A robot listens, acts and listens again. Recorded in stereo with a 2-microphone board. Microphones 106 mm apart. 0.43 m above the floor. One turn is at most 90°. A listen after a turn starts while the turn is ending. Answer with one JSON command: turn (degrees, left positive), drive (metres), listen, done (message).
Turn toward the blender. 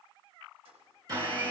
{"turn": -40}
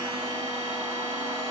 {"listen": true}
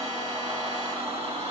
{"turn": -90}
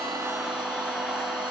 {"done": "Facing the blender, 2 to 4 m away."}